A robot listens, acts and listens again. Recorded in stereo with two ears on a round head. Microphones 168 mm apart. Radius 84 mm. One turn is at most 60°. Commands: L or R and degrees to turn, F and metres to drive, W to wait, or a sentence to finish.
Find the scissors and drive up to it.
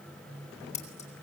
L40
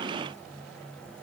W
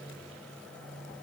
W
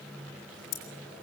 L60
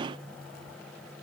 L40
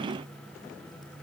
W
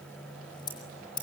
L25
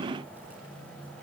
W
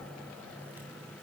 W
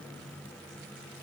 Facing where the scissors came from. I can't hear it now. I did not reach it.